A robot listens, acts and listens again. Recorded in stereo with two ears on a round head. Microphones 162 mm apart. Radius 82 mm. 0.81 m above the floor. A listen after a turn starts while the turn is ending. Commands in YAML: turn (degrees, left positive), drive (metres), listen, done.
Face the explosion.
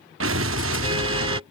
turn: -70
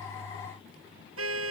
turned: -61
listen: true
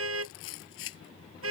done: "I heard an explosion, but can't make it out now. It was about 10° right or 45° right."